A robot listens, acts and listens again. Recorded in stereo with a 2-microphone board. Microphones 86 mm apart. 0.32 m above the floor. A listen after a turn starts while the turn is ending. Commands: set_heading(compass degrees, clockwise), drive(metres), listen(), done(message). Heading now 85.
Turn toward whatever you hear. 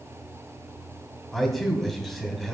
set_heading(55)
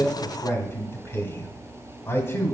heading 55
set_heading(265)
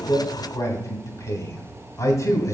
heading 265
set_heading(220)
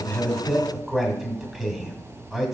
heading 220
done("Found it: a man speaking, straight ahead, 2 to 4 m away.")